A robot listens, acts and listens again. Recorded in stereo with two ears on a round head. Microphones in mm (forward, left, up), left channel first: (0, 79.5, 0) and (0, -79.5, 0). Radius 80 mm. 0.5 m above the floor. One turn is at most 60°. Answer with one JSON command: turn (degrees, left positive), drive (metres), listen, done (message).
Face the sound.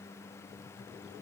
{"listen": true}
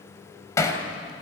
{"turn": 15}
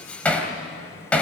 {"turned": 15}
{"done": "Facing the hammering, 2 to 4 m away."}